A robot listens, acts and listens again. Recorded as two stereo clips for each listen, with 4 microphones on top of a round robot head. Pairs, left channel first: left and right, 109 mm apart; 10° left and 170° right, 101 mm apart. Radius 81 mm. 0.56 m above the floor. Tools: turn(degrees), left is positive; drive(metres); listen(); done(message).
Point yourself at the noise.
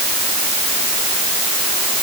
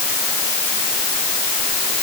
listen()
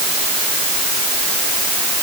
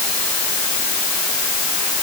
listen()
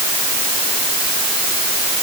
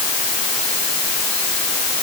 done("I can't make out anything to turn to.")